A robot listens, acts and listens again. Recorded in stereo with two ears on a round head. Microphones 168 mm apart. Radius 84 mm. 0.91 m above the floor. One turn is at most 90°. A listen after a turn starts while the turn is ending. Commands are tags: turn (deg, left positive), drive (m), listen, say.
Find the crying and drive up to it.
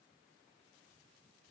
<listen/>
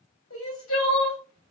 <turn deg="90"/>
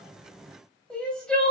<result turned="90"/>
<drive m="1.0"/>
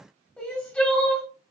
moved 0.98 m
<drive m="1.0"/>
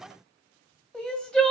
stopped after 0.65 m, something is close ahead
<say>I am next to the crying.</say>